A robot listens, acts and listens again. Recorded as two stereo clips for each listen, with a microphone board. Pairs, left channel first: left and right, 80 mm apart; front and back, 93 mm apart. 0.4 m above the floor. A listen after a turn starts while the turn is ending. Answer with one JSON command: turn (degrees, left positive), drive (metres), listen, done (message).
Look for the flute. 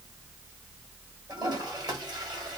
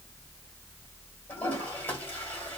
{"listen": true}
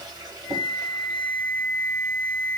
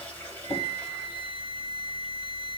{"turn": -165}
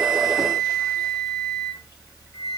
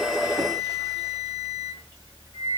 {"turn": 35}
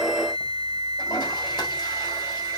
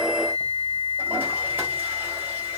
{"turn": 20}
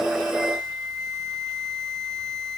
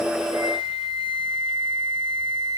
{"done": "Found it: a flute, straight ahead, 1 to 2 m away."}